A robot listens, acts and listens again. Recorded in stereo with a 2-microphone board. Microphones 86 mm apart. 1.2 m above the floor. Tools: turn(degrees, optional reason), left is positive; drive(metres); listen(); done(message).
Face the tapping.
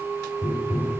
turn(degrees=-30)
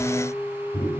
turn(degrees=20, reason="So it is at 20° left.")
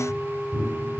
done("Found it: tapping, straight ahead.")